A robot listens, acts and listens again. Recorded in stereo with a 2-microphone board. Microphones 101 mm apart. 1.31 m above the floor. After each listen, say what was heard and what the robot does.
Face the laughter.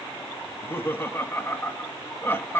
The laughter: about 20° left or 160° left. Turn 20° left.
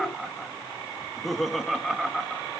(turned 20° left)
Found it: laughter, straight ahead.